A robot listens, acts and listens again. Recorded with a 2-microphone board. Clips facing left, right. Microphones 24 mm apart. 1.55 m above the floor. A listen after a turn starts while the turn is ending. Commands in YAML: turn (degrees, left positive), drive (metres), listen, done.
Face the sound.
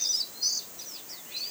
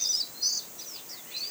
listen: true
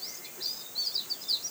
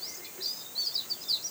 listen: true
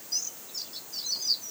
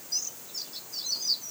done: "I can't make out anything to turn to."